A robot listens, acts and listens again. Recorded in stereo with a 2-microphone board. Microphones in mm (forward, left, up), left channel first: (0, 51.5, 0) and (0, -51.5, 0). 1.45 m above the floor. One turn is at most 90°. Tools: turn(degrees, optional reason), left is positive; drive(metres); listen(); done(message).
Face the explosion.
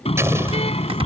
turn(degrees=-25, reason="The explosion: about 25° right or 155° right.")
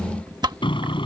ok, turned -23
listen()
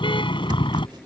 done("I heard an explosion, but can't make it out now. It was about 5° right or 130° right.")